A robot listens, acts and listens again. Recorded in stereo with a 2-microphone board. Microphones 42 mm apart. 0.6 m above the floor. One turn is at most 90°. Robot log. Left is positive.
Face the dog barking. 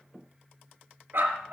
note: The dog barking: about 60° right or 120° right.
cmd yaw -60
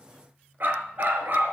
note: So it is at 55° right.
cmd yaw -55
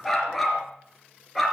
end: Found it: a dog barking, straight ahead, 2 to 4 m away.